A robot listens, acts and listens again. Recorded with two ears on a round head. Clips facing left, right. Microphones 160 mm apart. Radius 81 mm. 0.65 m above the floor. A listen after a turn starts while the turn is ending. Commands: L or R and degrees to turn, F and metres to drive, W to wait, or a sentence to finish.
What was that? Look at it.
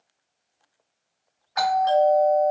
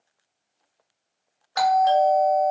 R50
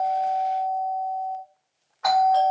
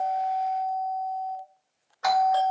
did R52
R60
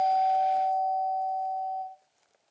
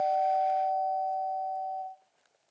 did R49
R10
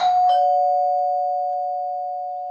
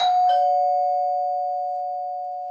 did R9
Found it: a doorbell, straight ahead.